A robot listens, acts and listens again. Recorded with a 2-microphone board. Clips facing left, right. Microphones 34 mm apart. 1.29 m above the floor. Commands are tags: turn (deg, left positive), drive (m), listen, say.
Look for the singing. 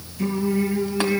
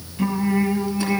<turn deg="-30"/>
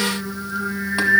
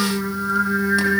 <turn deg="-125"/>
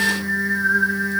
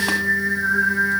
<say>Found it: singing, straight ahead.</say>